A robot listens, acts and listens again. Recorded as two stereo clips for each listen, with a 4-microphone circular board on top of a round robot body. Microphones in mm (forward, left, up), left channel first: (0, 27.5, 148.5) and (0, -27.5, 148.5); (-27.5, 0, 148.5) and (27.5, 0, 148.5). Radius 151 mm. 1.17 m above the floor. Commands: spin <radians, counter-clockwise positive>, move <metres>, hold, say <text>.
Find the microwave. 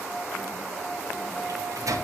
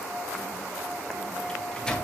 spin -1.83
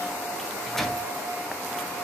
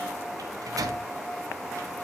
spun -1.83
say Facing the microwave.